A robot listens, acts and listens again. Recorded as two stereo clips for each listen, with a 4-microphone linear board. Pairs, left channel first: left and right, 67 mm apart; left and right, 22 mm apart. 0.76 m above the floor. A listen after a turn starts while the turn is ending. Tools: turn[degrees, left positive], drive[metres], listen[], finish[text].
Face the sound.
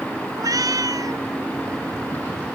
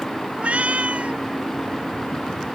Thought: The cat meowing: about 70° right or 110° right.
Action: turn[-70]
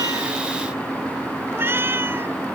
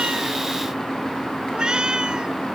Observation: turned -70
Thought: So it is at 40° right.
Action: turn[-40]
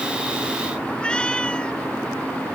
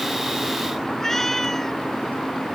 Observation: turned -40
Thought: The cat meowing is now 15° left.
Action: turn[15]
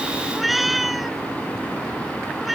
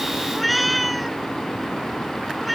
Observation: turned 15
Action: finish[Facing the cat meowing.]